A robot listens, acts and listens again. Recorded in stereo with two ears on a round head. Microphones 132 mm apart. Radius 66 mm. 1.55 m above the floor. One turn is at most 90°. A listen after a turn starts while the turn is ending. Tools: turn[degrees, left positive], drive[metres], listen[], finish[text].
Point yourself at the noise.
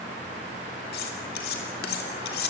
Action: turn[90]
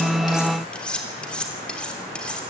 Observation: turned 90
Action: finish[Facing the cutlery clinking, 2 to 4 m away.]